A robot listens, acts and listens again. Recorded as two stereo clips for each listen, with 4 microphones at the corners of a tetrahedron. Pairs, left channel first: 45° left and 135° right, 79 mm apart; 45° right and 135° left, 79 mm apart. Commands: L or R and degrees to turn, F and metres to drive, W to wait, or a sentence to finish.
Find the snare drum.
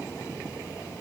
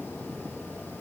W
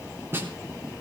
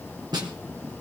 L165
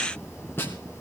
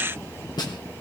R15
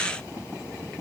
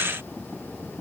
W
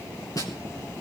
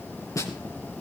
Facing the snare drum.